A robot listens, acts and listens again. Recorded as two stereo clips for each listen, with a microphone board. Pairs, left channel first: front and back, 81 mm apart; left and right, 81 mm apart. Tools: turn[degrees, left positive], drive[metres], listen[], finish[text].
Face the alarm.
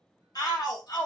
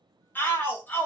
Action: listen[]
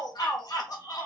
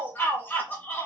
Action: listen[]
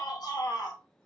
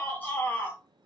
Action: finish[I can't make out an alarm, only a shout.]